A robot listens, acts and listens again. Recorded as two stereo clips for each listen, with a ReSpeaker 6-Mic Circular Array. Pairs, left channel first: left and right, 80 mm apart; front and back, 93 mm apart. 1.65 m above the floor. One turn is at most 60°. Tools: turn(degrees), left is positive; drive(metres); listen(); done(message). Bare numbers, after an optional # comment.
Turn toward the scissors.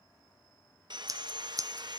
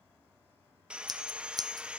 # The scissors: 135° right.
turn(-60)
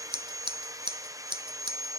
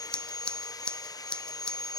# The scissors is now 80° right.
turn(-60)
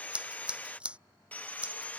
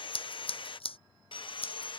# The scissors is now 15° right.
turn(-15)
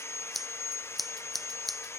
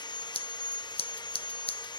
done("Facing the scissors.")